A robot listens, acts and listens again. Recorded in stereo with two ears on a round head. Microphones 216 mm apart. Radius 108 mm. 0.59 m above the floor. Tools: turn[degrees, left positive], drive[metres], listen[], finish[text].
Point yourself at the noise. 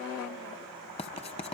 Thought: The writing: about 25° left or 155° left.
Action: turn[25]
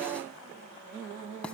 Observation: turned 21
Action: finish[Found it: writing, straight ahead, 1 to 2 m away.]